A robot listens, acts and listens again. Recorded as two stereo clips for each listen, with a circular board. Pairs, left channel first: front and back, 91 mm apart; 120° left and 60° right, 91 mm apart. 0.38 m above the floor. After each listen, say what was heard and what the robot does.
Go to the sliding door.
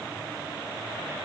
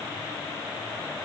Keep listening.
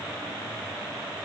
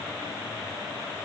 Keep listening.
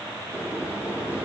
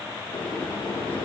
The sliding door: 110° left. Turn 110° left.
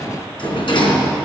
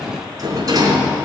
The sliding door is now 15° right. Turn 15° right.
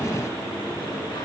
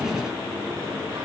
Drive 1.0 m forward.
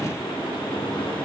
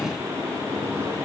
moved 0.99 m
Drive 1.0 m forward.
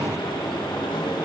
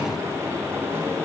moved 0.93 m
Drive 1.0 m forward.
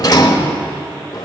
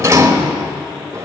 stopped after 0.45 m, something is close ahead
The sliding door is now 15° right. Turn 15° right.
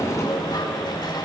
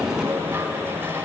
I am next to the sliding door.